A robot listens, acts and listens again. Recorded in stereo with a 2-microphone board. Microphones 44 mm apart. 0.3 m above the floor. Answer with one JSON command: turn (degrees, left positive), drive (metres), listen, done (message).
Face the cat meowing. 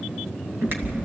{"turn": -75}
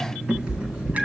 {"turn": -25}
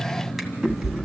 {"turn": -10}
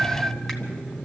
{"done": "Found it: a cat meowing, straight ahead, 1 to 2 m away."}